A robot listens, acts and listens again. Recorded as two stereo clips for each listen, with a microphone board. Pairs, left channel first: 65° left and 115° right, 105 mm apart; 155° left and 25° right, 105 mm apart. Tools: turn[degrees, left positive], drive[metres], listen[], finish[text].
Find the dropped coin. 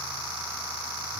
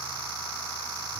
Action: listen[]
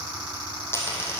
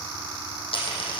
Thought: The dropped coin: 135° left.
Action: turn[135]
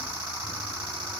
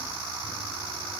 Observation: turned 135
Action: finish[I heard a dropped coin from this way, but can't make it out now.]